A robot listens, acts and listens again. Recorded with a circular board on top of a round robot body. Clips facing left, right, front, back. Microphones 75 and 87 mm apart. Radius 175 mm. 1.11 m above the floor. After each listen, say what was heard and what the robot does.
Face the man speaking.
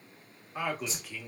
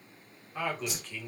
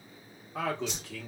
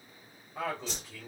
Facing the man speaking, 1 to 2 m away.